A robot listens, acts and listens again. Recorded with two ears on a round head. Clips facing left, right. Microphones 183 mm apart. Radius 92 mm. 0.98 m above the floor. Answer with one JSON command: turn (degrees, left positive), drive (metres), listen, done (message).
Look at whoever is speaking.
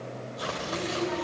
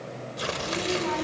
{"turn": -90}
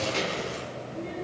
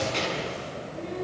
{"done": "Found it: a child speaking, straight ahead."}